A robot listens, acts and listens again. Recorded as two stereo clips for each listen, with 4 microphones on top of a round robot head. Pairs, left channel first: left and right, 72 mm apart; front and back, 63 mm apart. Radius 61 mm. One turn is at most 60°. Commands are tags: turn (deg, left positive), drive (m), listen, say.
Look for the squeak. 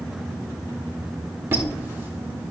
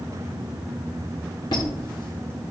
<turn deg="-30"/>
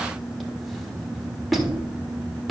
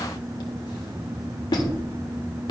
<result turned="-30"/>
<say>Found it: a squeak, straight ahead.</say>